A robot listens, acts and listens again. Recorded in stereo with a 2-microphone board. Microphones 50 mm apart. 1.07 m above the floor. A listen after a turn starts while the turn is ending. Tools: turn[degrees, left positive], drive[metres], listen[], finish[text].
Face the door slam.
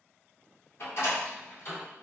Thought: The door slam: about 60° left or 120° left.
Action: turn[60]
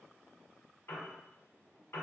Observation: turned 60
Action: listen[]
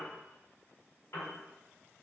Action: finish[I heard a door slam, but can't make it out now. It was about straight ahead or 60° left.]